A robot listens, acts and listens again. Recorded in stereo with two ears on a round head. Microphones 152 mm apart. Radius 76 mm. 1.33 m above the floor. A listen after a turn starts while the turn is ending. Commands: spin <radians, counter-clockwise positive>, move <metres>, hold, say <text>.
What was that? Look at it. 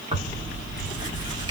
spin -0.44
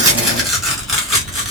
say Found it: tearing paper, straight ahead, 1 to 2 m away.